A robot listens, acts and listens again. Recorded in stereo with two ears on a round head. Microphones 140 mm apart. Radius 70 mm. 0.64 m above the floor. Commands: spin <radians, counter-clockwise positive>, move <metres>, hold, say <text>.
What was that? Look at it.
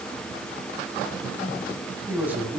spin -0.52
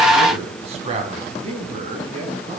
spin -2.36
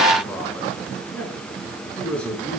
spin 0.17
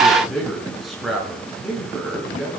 say Facing the man speaking, over 4 m away.